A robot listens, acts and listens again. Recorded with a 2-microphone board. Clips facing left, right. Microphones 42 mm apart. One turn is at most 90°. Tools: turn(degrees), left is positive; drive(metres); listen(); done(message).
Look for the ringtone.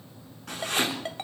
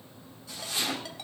turn(degrees=40)
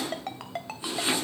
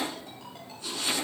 turn(degrees=90)
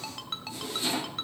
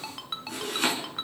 done("Found it: a ringtone, straight ahead, 2 to 4 m away.")